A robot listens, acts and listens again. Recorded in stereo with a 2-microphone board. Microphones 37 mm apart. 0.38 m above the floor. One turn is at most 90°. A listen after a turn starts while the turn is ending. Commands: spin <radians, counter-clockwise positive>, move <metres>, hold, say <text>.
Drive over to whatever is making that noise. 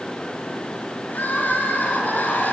spin 1.05
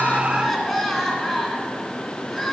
move 1.0
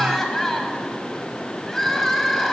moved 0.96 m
spin 0.17
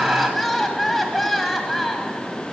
move 1.0
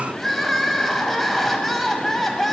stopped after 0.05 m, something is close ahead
say Arrived at the crying, straight ahead.